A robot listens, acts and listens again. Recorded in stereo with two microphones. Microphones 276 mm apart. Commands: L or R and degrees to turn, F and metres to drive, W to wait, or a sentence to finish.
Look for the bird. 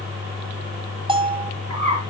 R90
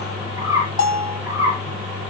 R10
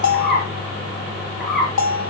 Found it: a bird, straight ahead.